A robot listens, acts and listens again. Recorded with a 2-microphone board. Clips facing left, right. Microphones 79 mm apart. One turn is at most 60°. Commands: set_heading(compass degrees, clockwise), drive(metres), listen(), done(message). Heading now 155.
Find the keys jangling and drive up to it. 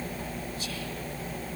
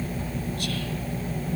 listen()
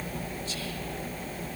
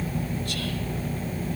listen()
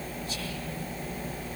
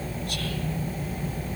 done("I can't make out keys jangling.")